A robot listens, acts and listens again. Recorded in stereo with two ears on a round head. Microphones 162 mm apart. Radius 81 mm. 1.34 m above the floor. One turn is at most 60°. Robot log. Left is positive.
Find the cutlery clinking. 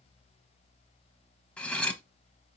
cmd yaw +30
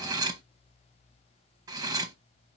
note: So it is at 20° right.
cmd yaw -20
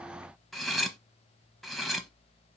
end: Found it: cutlery clinking, straight ahead, under 1 m away.